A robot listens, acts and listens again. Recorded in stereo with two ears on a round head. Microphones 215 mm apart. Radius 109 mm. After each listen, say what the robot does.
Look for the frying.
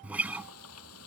Turn 70° left.
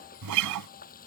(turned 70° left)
Turn 35° left.
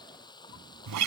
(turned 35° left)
Turn 20° left.
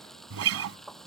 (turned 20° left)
Found it: frying, straight ahead.